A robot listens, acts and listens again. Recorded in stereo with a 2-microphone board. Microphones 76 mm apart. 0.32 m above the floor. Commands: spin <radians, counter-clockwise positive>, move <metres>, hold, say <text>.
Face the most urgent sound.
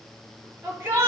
spin -0.61
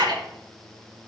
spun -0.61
spin -1.92
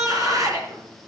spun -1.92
spin -0.87
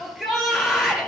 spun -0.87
say Found it: a shout, straight ahead, over 4 m away.